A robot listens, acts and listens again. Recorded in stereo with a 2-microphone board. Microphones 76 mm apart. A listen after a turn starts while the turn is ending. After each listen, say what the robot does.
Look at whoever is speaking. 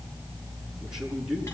Turn 30° right.
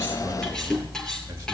Keep listening.
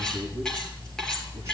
Keep listening.
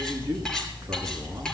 Turn 145° right.
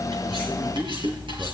Turn 35° right.
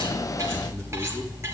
Keep listening.
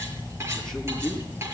Turn 10° left.
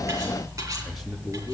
Facing the man speaking, over 4 m away.